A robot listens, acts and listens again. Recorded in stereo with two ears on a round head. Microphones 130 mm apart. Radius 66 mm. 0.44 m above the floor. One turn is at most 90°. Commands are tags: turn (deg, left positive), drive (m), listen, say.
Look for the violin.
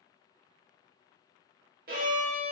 <turn deg="-60"/>
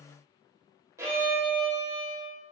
<turn deg="-20"/>
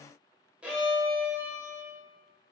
<turn deg="-10"/>
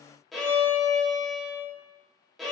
<say>Found it: a violin, straight ahead, under 1 m away.</say>